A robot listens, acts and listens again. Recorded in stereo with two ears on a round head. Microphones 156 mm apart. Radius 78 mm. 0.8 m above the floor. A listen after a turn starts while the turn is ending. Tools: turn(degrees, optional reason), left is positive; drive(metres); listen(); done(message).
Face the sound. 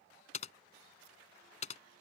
turn(degrees=40, reason="The typing on a keyboard: about 40° left or 140° left.")
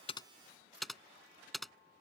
done("Facing the typing on a keyboard.")